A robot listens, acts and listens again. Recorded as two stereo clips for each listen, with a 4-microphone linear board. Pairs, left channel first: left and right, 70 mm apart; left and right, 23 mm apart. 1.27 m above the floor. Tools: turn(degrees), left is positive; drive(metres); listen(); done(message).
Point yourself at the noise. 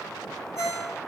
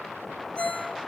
turn(degrees=50)
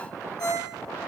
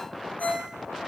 turn(degrees=80)
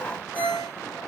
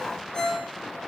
turn(degrees=25)
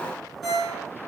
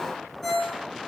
done("Found it: a ringtone, straight ahead.")